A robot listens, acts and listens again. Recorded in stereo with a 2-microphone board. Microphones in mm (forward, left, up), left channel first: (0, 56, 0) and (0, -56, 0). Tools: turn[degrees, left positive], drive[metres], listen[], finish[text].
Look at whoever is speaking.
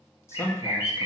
Thought: The man speaking: about 25° left or 155° left.
Action: turn[25]
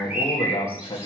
Thought: So it is at 130° left.
Action: turn[130]
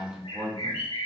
Action: finish[Facing the man speaking, 2 to 4 m away.]